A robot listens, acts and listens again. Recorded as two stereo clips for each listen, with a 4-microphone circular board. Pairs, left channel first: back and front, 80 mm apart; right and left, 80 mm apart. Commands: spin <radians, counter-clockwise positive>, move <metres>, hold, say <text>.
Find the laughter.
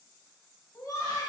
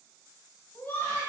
spin -2.71
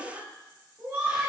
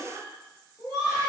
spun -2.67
spin -0.87
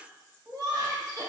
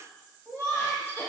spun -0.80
spin -0.52
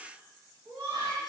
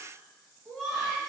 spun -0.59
say Found it: laughter, straight ahead.